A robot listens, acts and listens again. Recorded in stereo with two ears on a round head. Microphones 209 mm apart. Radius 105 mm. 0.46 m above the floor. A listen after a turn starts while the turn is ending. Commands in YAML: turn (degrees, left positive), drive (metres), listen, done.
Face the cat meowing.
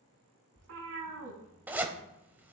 turn: -60
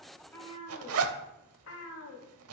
turn: 70
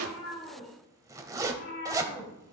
turn: 55
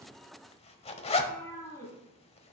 turn: 15
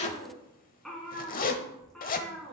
done: "Found it: a cat meowing, straight ahead, 2 to 4 m away."